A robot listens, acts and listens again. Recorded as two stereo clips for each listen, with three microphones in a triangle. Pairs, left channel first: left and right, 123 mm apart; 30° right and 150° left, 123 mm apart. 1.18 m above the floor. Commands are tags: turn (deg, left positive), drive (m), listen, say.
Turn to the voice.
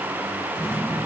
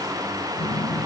<listen/>
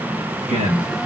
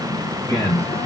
<turn deg="-85"/>
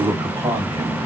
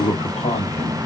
<turn deg="-30"/>
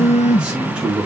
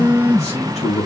<say>Facing the man speaking.</say>